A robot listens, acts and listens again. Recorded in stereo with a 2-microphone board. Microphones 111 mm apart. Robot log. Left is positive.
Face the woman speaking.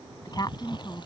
note: The woman speaking: about 35° left or 145° left.
cmd yaw +35
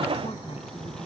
cmd idle
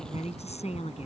note: So it is at 105° left.
cmd yaw +105
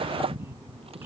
note: The woman speaking is now 20° right.
cmd yaw -20
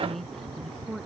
end: Found it: a woman speaking, straight ahead.